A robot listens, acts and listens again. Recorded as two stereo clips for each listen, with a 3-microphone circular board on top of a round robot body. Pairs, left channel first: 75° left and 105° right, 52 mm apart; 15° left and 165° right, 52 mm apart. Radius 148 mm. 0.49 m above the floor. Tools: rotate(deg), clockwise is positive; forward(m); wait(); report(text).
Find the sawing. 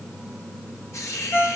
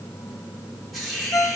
wait()
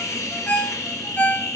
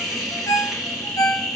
wait()
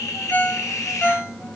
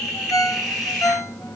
report("I can't make out sawing, only a ringtone and a hiss.")